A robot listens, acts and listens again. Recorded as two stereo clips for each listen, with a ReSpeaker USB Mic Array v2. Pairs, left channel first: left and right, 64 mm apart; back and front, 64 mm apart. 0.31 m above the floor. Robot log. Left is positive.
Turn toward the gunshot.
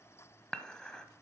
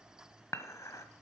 cmd idle
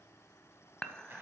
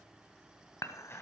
cmd idle
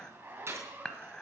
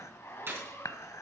note: The gunshot: 45° right.
cmd yaw -45
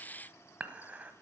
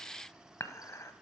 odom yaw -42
end: Facing where the gunshot came from. I can't hear it now.